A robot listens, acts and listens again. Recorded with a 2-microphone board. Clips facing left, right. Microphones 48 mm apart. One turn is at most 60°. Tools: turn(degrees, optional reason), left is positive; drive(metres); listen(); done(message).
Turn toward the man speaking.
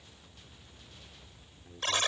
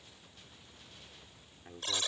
turn(degrees=-40, reason="The man speaking: about 40° right or 140° right.")
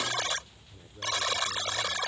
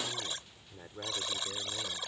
turn(degrees=-60, reason="So it is at 100° right.")
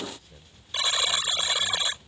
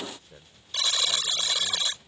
turn(degrees=-40, reason="Nothing new. It was at 40° right.")
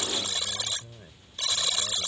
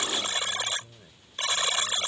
turn(degrees=20, reason="The man speaking is now 20° left.")
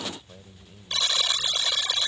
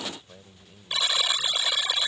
done("Facing the man speaking.")